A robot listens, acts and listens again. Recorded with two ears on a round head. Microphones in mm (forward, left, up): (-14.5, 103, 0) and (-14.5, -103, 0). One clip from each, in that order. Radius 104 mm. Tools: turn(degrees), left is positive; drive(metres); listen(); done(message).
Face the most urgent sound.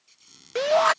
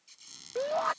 turn(degrees=65)
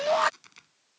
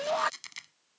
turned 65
turn(degrees=10)
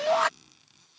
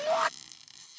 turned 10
done("Facing the shout.")